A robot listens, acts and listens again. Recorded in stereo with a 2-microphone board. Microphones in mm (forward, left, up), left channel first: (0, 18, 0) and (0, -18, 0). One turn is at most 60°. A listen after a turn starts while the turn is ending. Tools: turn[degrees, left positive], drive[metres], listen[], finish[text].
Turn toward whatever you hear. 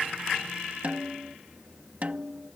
Thought: The snare drum: about 45° right or 135° right.
Action: turn[-45]
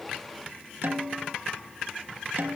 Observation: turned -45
Thought: So it is at 85° right.
Action: turn[-60]
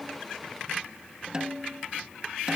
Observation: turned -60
Thought: The snare drum is now 25° right.
Action: turn[-25]
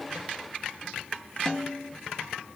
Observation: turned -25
Thought: The snare drum is now 15° left.
Action: turn[15]
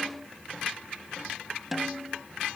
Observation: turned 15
Action: finish[Facing the snare drum.]